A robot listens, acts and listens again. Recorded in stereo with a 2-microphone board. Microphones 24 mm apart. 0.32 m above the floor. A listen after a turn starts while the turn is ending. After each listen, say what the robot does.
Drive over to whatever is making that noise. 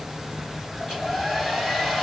Turn 30° left.
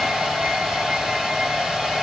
Turn 30° right.
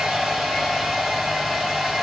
Turn 10° right.
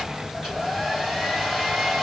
Drive 1.0 m forward.
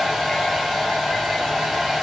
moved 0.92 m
Drive 1.0 m forward.
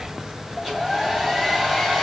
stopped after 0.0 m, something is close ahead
I am next to the hair dryer.